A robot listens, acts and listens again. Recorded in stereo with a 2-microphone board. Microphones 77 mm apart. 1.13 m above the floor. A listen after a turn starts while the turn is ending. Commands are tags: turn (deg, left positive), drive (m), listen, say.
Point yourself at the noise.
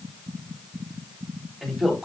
<turn deg="30"/>
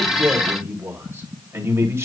<turn deg="-35"/>
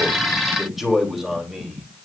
<say>Found it: a man speaking, straight ahead.</say>